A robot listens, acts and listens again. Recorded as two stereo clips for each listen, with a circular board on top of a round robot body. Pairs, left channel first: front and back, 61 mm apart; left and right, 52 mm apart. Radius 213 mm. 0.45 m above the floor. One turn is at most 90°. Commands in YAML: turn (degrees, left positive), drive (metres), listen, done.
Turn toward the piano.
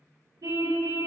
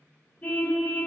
listen: true
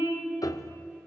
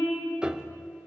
turn: -15
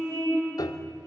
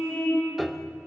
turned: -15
done: "Found it: a piano, straight ahead."